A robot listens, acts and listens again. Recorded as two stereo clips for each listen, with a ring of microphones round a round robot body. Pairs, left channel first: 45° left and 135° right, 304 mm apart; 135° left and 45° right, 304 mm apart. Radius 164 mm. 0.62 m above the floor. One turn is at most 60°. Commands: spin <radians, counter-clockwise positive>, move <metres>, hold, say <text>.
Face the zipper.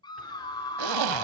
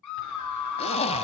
spin -1.05
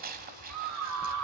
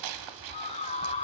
spin -1.05
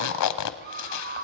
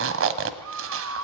say Found it: a zipper, straight ahead, 1 to 2 m away.